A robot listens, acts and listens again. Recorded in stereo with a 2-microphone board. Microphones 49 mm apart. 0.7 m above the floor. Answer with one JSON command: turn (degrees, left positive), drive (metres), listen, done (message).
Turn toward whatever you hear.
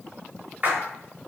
{"turn": -35}
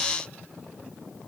{"listen": true}
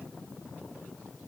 {"done": "I heard a splash, but can't make it out now. It was about straight ahead or 110° right."}